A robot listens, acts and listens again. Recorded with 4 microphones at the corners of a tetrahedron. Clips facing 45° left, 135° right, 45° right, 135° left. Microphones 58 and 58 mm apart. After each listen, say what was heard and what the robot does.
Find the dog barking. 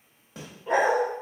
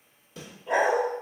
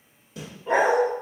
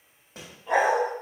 The dog barking: 10° left. Turn 10° left.
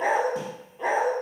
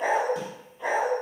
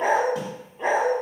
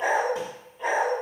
The dog barking is now 10° left. Turn 10° left.
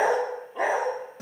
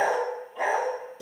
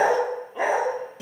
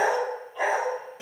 The dog barking is now 25° left. Turn 25° left.
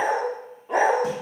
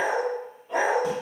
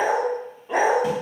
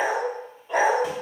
The dog barking is now 25° left. Turn 25° left.
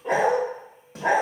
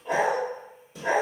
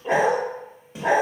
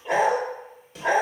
The dog barking is now 25° left. Turn 25° left.
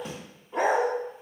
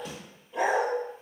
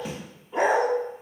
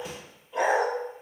Found it: a dog barking, straight ahead.